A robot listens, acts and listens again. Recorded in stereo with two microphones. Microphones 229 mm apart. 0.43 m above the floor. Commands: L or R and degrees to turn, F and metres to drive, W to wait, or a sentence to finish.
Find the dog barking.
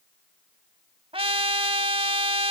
W
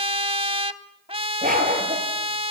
R35
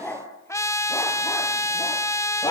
L15
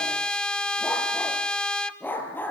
L10
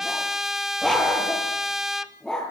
Found it: a dog barking, straight ahead, over 4 m away.